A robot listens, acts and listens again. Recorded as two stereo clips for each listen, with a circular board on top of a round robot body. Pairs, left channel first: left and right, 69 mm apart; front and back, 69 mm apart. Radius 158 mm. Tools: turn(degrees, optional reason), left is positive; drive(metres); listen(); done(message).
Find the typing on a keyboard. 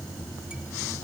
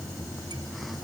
listen()
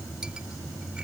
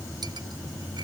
listen()
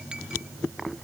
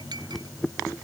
done("I can't make out typing on a keyboard.")